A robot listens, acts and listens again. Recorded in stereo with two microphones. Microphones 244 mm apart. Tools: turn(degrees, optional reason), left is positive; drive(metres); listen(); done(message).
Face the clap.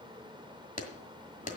turn(degrees=30, reason="The clap: about 30° left or 150° left.")
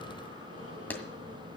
turn(degrees=10, reason="So it is at 10° left.")
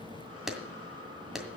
done("Facing the clap, 1 to 2 m away.")